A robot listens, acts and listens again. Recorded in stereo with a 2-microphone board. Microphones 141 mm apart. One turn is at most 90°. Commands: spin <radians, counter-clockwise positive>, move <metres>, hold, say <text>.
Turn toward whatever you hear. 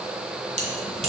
spin -0.96
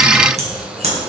spin -0.96
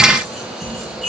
say Found it: keys jangling, straight ahead, 2 to 4 m away.